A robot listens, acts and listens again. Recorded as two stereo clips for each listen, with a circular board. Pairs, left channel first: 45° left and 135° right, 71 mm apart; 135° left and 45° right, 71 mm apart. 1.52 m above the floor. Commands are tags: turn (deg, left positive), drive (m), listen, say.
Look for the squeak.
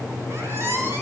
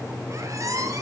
<turn deg="-85"/>
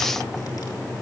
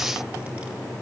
<listen/>
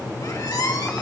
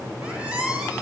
<turn deg="25"/>
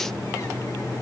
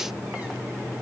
<listen/>
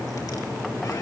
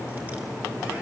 <listen/>
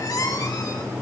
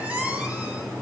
<turn deg="20"/>
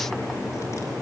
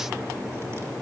<listen/>
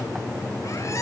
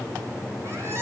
<say>Facing the squeak, over 4 m away.</say>